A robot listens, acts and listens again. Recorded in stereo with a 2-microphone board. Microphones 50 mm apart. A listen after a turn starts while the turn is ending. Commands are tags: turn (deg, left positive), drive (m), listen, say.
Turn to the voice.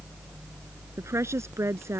<turn deg="-90"/>
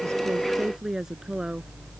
<turn deg="-10"/>
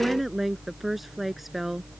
<say>Found it: a woman speaking, straight ahead.</say>